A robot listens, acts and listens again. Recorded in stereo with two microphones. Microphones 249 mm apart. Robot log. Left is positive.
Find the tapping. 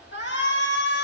cmd idle
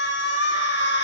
cmd idle
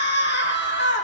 end: I can't make out tapping to turn to.